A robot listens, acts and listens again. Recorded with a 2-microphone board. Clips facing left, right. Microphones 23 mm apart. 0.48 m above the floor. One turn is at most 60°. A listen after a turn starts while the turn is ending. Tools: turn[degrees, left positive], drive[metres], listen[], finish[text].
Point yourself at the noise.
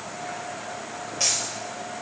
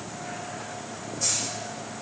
Thought: The dropped coin: about 60° left or 120° left.
Action: turn[60]
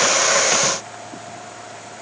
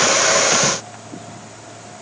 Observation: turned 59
Action: listen[]
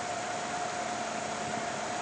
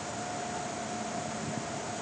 Action: finish[I heard a dropped coin, but can't make it out now. It was about straight ahead or 60° left.]